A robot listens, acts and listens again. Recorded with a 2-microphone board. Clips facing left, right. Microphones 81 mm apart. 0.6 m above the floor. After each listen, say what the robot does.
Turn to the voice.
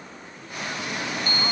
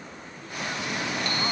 Keep listening.
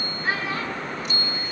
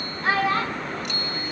Turn 70° right.
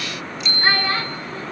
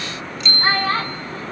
Turn 35° right.
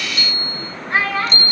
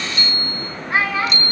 Facing the child speaking, over 4 m away.